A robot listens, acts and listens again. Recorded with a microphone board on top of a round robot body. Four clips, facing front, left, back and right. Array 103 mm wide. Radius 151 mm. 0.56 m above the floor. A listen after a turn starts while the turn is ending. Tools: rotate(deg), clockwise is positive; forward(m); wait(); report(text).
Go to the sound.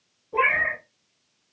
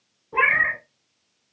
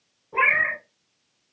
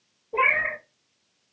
rotate(-115)
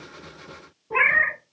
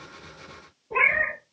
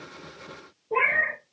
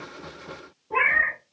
rotate(20)
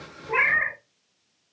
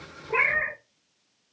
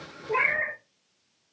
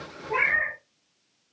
forward(1.0)
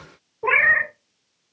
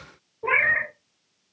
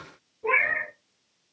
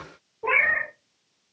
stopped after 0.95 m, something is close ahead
report("I am next to the cat meowing.")